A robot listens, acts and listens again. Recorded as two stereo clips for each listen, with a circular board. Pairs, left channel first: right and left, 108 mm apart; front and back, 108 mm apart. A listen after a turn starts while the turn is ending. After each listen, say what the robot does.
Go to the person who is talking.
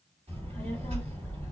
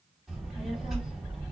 Turn 95° left.
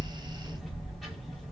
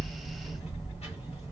Drive 1.0 m forward.
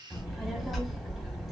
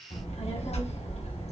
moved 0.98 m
Drive 1.0 m forward.
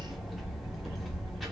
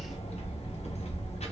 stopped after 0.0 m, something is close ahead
I am next to the child speaking.